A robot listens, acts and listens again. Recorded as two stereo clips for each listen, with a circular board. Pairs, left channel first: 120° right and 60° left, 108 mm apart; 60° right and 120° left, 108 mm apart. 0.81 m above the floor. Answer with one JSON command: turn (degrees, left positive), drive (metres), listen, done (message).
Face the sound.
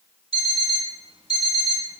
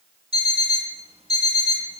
{"turn": 90}
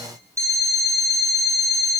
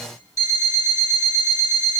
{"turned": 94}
{"done": "Found it: an alarm clock, straight ahead, 2 to 4 m away."}